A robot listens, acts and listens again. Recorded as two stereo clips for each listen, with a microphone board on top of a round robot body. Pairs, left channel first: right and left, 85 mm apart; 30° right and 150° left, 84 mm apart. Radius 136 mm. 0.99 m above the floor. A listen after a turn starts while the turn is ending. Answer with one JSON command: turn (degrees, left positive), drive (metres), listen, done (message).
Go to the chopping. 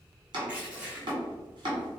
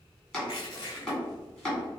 {"turn": 50}
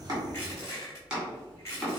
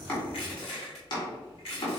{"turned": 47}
{"drive": 1.0}
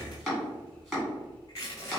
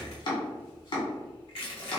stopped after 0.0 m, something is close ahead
{"done": "Something is in my way. I am facing the chopping but have not reached it."}